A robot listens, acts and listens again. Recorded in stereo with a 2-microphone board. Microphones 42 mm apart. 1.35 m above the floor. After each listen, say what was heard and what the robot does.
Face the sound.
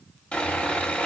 The sawing: about 25° left or 155° left. Turn 25° left.
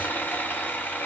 So it is at 120° left. Turn 120° left.
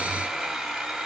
Facing the sawing.